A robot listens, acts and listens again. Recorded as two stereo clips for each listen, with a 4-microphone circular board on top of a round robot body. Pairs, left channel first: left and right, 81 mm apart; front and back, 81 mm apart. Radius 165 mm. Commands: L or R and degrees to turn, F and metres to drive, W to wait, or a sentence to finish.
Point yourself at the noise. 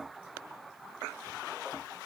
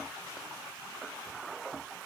W
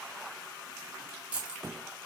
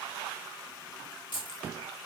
R15
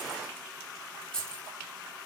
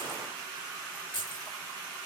L10
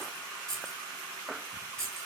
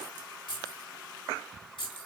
L10
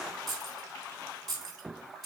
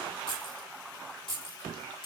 Facing the keys jangling.